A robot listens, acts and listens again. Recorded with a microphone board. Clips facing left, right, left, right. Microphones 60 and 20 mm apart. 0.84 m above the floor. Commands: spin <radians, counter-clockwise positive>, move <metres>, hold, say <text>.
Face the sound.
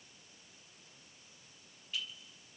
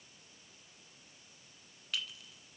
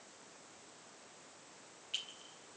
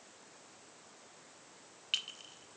spin -1.57
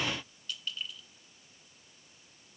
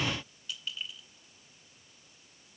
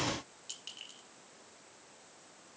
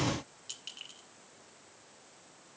say Found it: a clink, straight ahead, 1 to 2 m away.